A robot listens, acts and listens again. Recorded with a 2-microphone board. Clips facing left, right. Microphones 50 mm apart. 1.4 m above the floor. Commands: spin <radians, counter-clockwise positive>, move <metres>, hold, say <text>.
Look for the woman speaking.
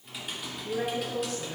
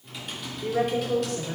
spin -1.57
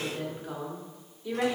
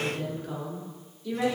spin 0.35
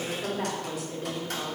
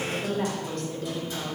spin 0.26
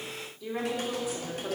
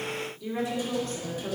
spin 0.17
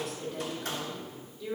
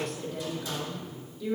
say Facing the woman speaking.